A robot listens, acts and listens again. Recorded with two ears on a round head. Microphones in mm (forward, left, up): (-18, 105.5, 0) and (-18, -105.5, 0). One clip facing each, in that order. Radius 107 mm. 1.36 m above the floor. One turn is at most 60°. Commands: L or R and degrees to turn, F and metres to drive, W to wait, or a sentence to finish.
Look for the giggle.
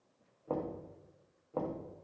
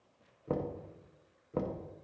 W
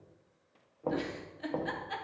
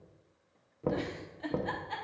L30
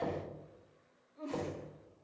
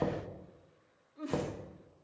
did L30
R20
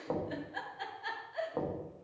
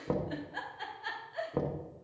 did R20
Facing the giggle, under 1 m away.